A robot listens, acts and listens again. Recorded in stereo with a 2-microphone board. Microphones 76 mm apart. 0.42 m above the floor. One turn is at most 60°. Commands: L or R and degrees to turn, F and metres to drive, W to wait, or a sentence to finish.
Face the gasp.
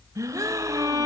R50
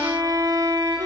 W
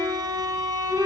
I heard a gasp, but can't make it out now. It was about straight ahead or 80° right.